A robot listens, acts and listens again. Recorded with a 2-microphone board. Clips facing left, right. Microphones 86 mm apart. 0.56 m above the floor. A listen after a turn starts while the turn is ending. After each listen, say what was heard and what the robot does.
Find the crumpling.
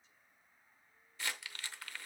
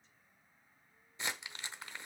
The crumpling: about 20° right or 160° right. Turn 20° right.
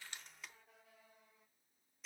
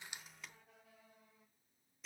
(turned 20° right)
Found it: crumpling, straight ahead, under 1 m away.